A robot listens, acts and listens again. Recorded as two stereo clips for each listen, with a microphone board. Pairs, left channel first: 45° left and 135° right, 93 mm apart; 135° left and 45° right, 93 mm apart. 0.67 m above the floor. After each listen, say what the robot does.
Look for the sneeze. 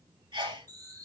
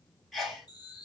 Turn 135° right.
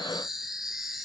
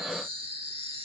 I heard a sneeze from this way, but can't make it out now.